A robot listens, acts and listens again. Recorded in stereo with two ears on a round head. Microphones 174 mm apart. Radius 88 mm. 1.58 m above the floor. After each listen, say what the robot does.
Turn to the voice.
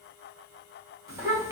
Turn 15° right.
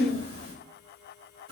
Turn 150° right.
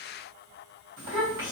Turn 65° right.
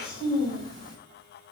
Turn 20° left.
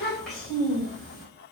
Found it: a child speaking, straight ahead.